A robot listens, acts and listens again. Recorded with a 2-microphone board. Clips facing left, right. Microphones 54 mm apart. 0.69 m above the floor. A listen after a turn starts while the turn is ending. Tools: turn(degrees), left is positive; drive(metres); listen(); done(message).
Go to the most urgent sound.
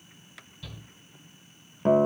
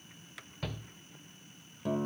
turn(degrees=-65)
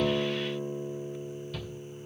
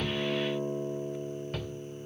turn(degrees=-50)
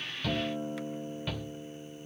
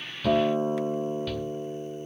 turn(degrees=15)
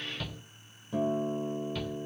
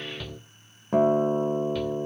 drive(metres=1.0)
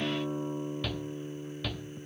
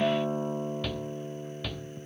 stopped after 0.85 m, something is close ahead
done("I am next to the shout.")